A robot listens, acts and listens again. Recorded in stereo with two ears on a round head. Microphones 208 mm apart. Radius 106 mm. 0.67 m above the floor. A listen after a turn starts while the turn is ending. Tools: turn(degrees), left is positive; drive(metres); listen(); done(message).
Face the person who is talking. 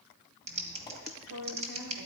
turn(degrees=-90)
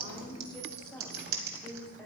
done("Found it: a woman speaking, straight ahead, 2 to 4 m away.")